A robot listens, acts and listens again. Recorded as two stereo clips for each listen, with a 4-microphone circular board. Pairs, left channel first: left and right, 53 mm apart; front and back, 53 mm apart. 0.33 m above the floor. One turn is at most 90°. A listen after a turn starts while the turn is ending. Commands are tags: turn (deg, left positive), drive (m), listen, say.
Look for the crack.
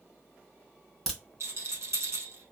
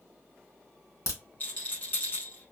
<say>Facing the crack.</say>